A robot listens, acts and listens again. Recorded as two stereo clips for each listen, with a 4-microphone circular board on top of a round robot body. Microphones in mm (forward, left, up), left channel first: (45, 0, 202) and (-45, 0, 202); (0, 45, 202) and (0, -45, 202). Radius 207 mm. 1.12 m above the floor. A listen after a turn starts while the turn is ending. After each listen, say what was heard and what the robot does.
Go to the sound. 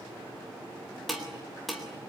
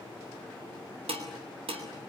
The dishes clattering: 90° right. Turn 90° right.
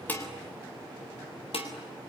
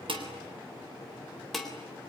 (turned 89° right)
Drive 1.0 m forward.
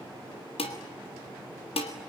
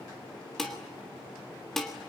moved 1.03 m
Drive 1.0 m forward.
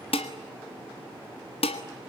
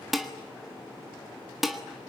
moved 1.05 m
Drive 1.0 m forward.
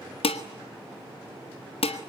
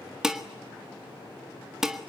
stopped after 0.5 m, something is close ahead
I am next to the dishes clattering.